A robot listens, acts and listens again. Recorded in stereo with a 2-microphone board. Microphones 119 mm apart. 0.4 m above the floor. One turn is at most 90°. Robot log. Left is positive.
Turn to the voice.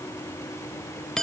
cmd idle
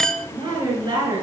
note: The woman speaking: about 35° right or 145° right.
cmd yaw -35
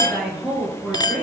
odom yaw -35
end: Facing the woman speaking, over 4 m away.